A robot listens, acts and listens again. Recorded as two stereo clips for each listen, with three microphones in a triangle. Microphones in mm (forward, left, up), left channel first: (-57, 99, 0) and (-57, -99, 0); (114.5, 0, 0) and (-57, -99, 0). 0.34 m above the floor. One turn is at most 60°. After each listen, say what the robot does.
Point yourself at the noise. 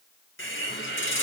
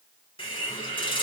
Turn 60° left.
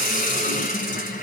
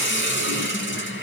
Turn 45° left.
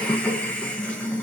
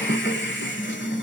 Found it: a hiss, straight ahead.